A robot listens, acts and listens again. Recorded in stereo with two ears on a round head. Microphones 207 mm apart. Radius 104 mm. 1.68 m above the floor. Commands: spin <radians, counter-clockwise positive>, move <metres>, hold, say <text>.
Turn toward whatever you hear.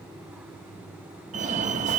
spin -0.61
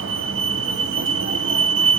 spin -1.83
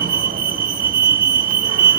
spin -0.79
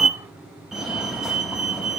say Found it: a fire alarm, straight ahead.